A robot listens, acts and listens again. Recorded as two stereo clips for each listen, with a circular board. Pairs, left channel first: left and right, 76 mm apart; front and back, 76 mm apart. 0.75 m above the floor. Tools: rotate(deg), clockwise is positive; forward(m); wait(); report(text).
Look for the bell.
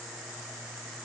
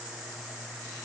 wait()
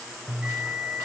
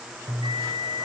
rotate(170)
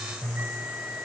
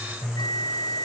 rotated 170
rotate(25)
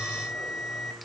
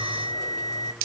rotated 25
report("Facing the bell, 2 to 4 m away.")